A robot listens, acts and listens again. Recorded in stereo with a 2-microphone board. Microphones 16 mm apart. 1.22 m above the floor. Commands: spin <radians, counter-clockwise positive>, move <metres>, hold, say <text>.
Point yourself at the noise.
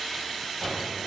spin -0.26
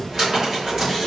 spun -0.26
spin -2.62
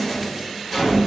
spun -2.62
spin 0.26
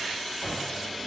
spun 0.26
say Found it: a cupboard door, straight ahead, 1 to 2 m away.